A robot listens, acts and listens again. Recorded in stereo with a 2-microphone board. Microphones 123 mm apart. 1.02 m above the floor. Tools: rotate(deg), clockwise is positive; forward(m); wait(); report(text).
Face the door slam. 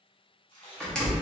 rotate(-30)
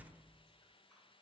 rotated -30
wait()
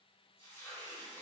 report("I heard a door slam, but can't make it out now. It was about 25° right or 145° left.")